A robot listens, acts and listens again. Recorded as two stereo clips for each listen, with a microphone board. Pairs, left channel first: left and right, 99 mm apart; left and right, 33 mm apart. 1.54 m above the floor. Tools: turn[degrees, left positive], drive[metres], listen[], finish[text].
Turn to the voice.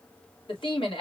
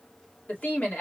Thought: The woman speaking: about 55° left or 125° left.
Action: turn[55]
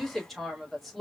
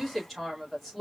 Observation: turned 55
Action: finish[Found it: a woman speaking, straight ahead, 2 to 4 m away.]